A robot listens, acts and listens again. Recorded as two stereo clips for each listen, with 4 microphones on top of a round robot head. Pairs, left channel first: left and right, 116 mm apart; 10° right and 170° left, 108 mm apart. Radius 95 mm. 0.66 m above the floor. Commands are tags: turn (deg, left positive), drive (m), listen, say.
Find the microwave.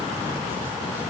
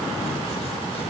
<listen/>
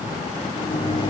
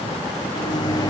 <turn deg="35"/>
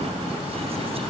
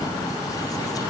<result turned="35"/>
<listen/>
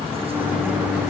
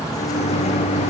<turn deg="-10"/>
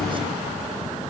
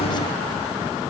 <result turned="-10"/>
<say>Facing the microwave, 1 to 2 m away.</say>